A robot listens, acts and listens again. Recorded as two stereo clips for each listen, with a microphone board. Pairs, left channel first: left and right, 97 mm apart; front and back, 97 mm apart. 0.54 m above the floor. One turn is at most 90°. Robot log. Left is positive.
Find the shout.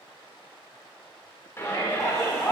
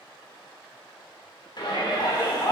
note: The shout: 30° left.
cmd yaw +30
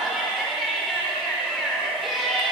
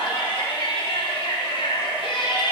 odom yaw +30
end: Found it: a shout, straight ahead, 1 to 2 m away.